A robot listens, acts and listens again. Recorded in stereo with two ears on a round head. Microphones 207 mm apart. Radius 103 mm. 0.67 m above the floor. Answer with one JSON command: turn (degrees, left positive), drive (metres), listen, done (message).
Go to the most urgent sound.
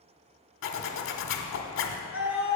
{"turn": -30}
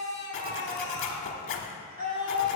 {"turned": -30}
{"turn": -145}
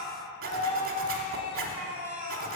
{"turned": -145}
{"turn": -40}
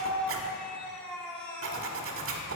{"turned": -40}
{"drive": 1.0}
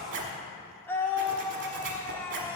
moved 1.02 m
{"turn": 10}
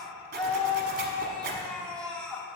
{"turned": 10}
{"drive": 1.0}
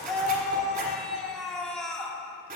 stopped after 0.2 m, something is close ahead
{"done": "Arrived at the scream, straight ahead."}